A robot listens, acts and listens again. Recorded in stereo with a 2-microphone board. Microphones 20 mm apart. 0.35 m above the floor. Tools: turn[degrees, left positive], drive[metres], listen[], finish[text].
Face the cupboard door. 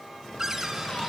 Thought: The cupboard door: about 25° right or 155° right.
Action: turn[-25]
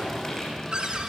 Thought: So it is at 130° right.
Action: turn[-130]
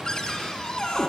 Thought: The cupboard door is now 40° left.
Action: turn[40]
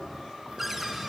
Thought: The cupboard door is now 15° right.
Action: turn[-15]
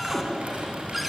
Action: finish[Found it: a cupboard door, straight ahead.]